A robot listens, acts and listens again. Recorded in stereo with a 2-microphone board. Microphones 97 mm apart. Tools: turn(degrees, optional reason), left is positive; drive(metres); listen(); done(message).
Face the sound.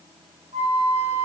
turn(degrees=-90)
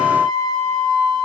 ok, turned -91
done("Found it: a flute, straight ahead.")